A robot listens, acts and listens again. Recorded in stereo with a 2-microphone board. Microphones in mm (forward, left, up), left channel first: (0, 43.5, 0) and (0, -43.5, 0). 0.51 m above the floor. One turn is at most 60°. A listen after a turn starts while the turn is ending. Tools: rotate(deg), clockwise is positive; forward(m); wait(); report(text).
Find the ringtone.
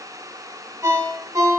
rotate(40)
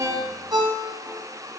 rotate(60)
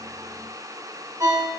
rotate(50)
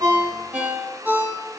rotate(20)
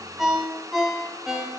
report("Found it: a ringtone, straight ahead.")